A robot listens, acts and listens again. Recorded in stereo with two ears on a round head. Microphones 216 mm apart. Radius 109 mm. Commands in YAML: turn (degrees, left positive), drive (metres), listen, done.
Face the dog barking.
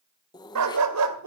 turn: -70
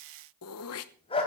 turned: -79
turn: 25
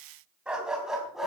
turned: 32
done: "Facing the dog barking."